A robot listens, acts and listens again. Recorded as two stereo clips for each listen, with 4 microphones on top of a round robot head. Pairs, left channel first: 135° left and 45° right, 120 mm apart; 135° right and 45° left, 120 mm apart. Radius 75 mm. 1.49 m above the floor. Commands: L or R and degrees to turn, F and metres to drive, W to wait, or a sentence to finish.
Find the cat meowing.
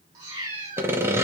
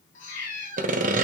R110
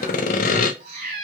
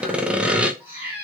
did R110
R30
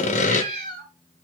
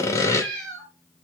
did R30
R15
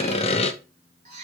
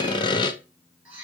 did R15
R25
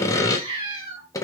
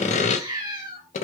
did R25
Found it: a cat meowing, straight ahead.